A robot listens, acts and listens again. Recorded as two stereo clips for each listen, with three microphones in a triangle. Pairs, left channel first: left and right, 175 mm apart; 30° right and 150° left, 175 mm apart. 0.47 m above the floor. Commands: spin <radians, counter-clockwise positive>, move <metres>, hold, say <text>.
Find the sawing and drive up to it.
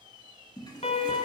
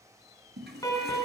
hold
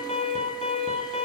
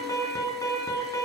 hold
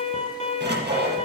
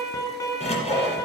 spin -1.40
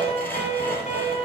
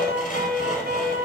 spin 0.17
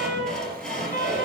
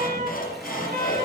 move 1.0
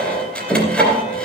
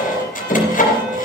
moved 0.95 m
move 1.0
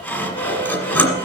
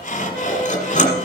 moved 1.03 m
spin 0.17
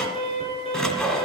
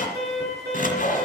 move 1.0
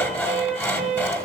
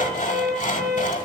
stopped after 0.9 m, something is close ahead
spin 0.17
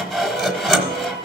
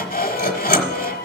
say I am next to the sawing.